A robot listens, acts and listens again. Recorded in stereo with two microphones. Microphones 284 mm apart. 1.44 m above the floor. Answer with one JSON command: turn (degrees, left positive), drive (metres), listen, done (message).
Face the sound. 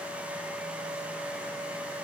{"listen": true}
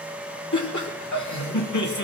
{"turn": 90}
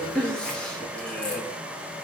{"done": "Found it: laughter, straight ahead."}